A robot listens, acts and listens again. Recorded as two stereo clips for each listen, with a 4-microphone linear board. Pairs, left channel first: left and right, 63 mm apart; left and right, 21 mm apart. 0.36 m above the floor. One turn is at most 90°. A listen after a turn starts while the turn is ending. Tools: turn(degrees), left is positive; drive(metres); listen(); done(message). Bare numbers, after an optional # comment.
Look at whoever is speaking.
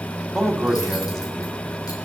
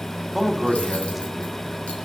turn(30)
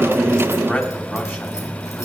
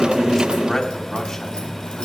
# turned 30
# So it is at 150° left.
turn(90)
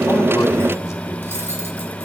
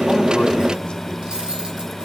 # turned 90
# Nothing new. It was at 60° left.
turn(60)
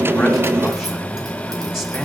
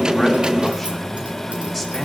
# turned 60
done("Found it: a man speaking, straight ahead.")